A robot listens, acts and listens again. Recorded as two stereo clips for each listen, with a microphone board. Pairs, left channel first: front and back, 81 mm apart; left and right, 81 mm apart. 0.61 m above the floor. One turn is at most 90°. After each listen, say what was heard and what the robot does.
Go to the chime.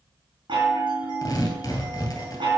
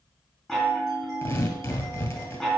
The chime: 175° left. Turn 90° left.
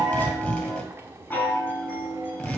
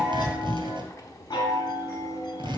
The chime is now 65° left. Turn 65° left.
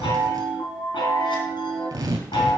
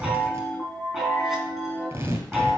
Drive 1.0 m forward.
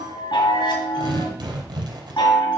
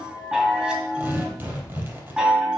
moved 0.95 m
The chime is now 10° right. Turn 10° right.
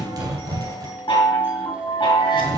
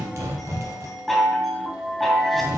Drive 1.0 m forward.
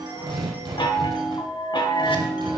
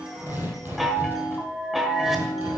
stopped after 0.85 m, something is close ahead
I am next to the chime.